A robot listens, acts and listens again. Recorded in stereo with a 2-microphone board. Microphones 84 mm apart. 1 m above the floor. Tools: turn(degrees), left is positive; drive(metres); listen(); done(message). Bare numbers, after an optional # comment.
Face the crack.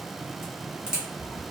turn(-30)
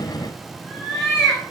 listen()
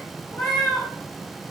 done("I heard a crack, but can't make it out now. It was about 20° left or 140° right.")